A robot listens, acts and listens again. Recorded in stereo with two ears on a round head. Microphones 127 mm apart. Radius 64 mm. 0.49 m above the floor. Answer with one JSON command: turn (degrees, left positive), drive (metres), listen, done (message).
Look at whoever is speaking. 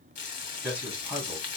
{"turn": -30}
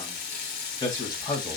{"turn": 25}
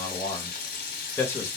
{"turn": 20}
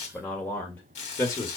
{"turn": 25}
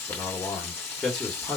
{"done": "Found it: a man speaking, straight ahead."}